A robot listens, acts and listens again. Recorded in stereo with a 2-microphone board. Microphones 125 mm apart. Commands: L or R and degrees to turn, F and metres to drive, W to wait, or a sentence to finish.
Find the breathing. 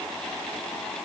W
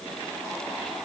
W
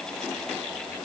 I can't make out breathing.